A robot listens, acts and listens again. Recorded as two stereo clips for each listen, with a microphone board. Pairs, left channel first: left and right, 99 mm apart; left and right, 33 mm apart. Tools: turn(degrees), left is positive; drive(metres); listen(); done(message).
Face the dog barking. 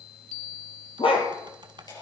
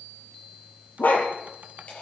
turn(degrees=65)
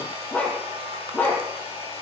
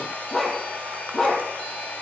turn(degrees=15)
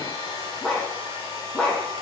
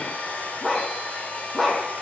turn(degrees=10)
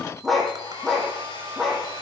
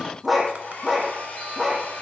done("Facing the dog barking.")